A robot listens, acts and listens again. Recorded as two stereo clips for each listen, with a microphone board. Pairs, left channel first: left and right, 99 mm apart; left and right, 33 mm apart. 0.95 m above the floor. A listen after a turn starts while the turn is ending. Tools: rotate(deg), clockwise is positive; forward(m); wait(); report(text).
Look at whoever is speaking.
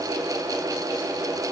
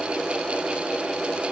wait()
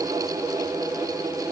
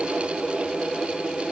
wait()
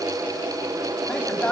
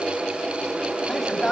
rotate(-30)
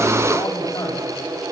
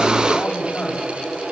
wait()
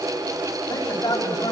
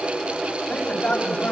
rotate(-135)
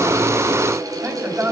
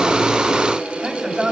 rotate(25)
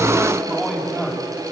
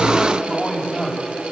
report("Facing the man speaking, over 4 m away.")